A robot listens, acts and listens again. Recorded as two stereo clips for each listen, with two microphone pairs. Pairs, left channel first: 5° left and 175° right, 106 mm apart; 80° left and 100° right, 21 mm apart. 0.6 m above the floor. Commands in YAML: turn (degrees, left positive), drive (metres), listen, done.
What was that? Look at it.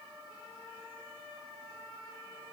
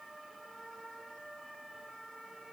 listen: true
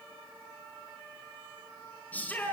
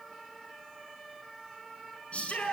turn: 80
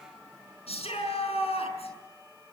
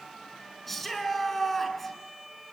done: "Facing the shout, over 4 m away."